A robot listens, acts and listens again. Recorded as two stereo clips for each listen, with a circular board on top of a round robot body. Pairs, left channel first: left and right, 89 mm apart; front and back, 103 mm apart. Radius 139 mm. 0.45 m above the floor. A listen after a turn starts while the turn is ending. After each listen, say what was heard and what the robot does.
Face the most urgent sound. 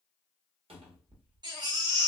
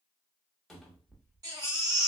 The baby crying: 125° right. Turn 125° right.
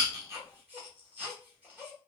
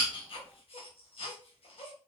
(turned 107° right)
The baby crying is now 15° right. Turn 15° right.
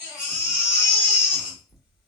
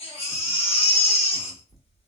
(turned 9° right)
Found it: a baby crying, straight ahead.